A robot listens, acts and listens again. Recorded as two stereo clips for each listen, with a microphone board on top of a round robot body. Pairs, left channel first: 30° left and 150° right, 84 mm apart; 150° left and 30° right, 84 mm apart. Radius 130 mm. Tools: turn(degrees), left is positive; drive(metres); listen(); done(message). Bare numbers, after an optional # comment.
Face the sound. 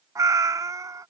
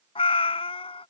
# The cat meowing: 155° left.
turn(155)
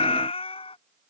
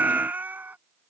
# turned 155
# The cat meowing is now 40° left.
turn(40)
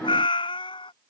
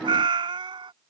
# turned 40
done("Found it: a cat meowing, straight ahead.")